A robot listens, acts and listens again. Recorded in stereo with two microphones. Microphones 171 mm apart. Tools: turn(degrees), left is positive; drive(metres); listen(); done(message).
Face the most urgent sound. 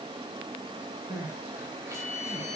turn(degrees=-15)
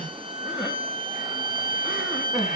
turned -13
done("Found it: crying, straight ahead, 2 to 4 m away.")